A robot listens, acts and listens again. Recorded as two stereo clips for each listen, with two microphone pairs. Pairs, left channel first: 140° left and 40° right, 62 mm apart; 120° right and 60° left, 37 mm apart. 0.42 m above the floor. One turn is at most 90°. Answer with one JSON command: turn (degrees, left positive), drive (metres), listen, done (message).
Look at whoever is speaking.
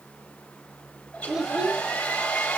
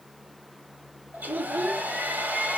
{"turn": 40}
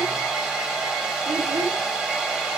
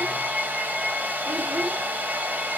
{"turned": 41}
{"listen": true}
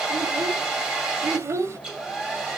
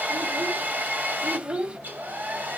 {"done": "Facing the child speaking."}